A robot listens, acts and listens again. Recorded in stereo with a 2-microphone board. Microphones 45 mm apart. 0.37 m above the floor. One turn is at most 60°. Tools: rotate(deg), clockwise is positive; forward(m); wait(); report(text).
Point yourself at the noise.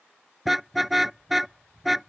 rotate(-30)
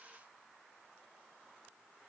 wait()
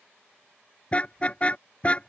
rotate(-60)
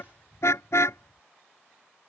rotate(-60)
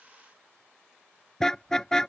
rotate(-10)
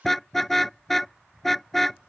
report("Found it: a car horn, straight ahead.")